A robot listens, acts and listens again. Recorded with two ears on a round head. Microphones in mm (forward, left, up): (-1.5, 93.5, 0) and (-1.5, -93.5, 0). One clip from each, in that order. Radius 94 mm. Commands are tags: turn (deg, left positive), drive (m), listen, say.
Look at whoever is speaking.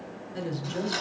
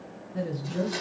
<turn deg="45"/>
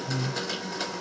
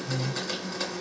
<turn deg="80"/>
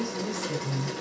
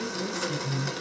<say>Facing the woman speaking.</say>